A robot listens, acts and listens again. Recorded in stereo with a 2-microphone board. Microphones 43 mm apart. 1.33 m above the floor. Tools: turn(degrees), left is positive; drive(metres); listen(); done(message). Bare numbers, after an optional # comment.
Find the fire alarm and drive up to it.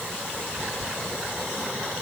listen()
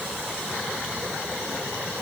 listen()
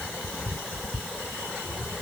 done("I can't make out a fire alarm to turn to.")